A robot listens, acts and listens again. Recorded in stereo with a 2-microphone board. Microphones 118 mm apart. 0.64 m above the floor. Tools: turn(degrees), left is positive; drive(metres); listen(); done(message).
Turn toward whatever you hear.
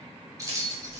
turn(degrees=-30)
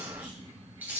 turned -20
turn(degrees=-15)
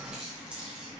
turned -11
turn(degrees=-30)
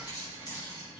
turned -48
turn(degrees=35)
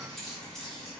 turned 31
done("Facing the keys jangling.")